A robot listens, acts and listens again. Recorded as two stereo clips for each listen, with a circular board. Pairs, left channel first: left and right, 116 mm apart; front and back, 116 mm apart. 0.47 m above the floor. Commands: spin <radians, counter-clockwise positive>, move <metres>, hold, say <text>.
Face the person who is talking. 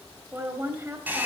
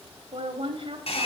spin -2.71
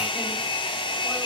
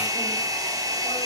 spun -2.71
hold
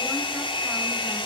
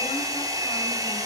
hold
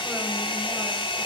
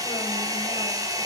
say I heard a woman speaking from this way, but can't make it out now.